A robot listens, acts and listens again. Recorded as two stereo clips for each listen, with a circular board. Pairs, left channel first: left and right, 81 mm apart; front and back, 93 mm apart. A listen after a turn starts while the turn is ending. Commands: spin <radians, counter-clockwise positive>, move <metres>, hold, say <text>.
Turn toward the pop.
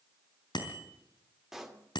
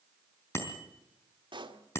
spin -3.05
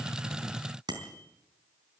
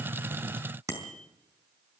say Facing where the pop came from. I can't hear it now.